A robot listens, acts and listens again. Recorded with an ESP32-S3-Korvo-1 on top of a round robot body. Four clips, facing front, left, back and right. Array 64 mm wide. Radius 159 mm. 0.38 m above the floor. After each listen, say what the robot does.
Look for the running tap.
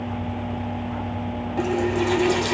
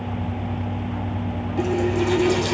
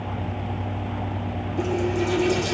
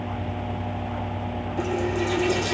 Turn 25° left.
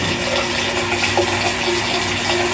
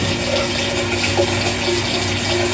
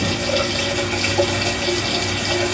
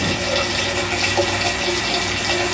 Found it: a running tap, straight ahead.